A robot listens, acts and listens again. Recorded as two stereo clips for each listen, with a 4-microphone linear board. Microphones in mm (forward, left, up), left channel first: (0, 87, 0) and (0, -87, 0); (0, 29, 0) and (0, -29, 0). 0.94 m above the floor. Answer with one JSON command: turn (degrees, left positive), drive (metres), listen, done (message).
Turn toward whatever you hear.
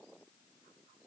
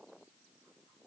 {"listen": true}
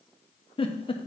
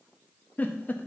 {"turn": 35}
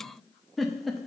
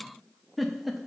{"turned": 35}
{"done": "Found it: a giggle, straight ahead, under 1 m away."}